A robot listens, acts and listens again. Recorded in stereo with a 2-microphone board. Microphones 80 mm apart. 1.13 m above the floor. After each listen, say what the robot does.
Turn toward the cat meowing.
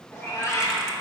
Turn 35° left.
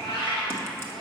Turn 100° left.
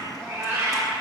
Turn 25° right.
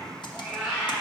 Turn 10° right.
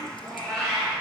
Facing the cat meowing.